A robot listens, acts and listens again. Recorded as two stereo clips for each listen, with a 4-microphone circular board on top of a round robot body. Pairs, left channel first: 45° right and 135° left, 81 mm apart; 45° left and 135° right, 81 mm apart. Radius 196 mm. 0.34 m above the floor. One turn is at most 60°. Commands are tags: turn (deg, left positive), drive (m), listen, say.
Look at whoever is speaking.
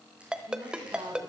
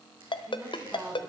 <turn deg="60"/>
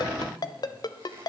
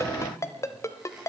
<turn deg="60"/>
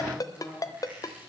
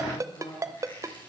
<turn deg="25"/>
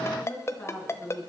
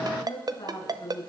<turn deg="20"/>
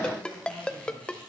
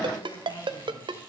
<listen/>
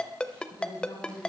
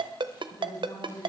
<say>Facing the woman speaking.</say>